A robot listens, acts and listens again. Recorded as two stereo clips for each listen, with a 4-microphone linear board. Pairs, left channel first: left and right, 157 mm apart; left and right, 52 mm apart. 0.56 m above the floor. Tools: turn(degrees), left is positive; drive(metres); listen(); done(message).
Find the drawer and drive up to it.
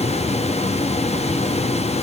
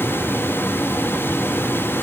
listen()
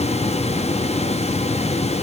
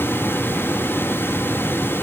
listen()
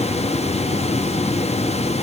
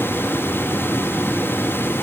done("I can't make out a drawer.")